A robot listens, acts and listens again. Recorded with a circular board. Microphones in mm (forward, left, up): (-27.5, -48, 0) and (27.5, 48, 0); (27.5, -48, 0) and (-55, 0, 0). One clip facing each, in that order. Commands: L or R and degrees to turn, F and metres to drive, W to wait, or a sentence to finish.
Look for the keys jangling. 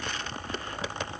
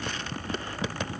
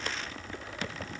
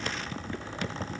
W
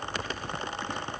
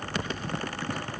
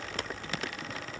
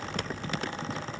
W
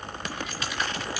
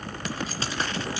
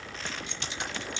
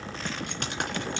L125
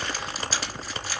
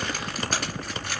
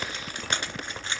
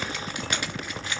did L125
L30
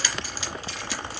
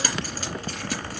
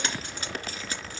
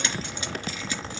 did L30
L20
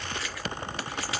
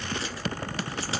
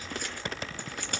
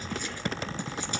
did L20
Found it: keys jangling, straight ahead.